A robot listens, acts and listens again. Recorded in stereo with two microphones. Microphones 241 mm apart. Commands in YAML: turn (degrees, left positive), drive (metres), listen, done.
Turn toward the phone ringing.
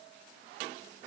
listen: true
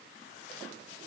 listen: true
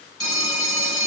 turn: 55
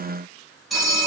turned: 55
done: "Found it: a phone ringing, straight ahead."